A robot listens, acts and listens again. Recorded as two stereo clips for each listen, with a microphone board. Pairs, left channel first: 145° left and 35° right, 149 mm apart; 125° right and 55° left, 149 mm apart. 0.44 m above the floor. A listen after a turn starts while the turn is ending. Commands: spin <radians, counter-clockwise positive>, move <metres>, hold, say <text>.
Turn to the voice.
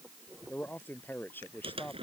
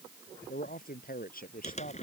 spin -2.36
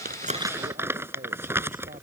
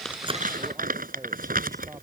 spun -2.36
hold
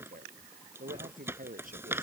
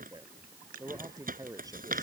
spin -0.17
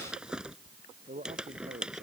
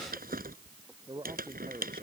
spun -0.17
say Facing the man speaking.